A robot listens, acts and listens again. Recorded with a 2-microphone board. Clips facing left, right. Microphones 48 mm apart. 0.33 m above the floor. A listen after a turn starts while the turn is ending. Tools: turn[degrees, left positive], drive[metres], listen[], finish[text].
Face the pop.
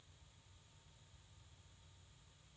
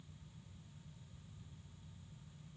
Action: listen[]
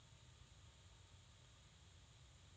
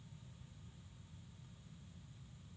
Action: listen[]
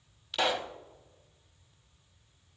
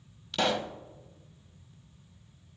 Action: turn[30]
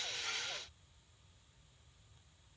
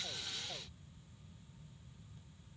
Action: listen[]
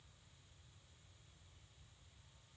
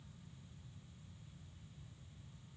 Action: finish[I heard a pop, but can't make it out now. It was about 25° right or 145° left.]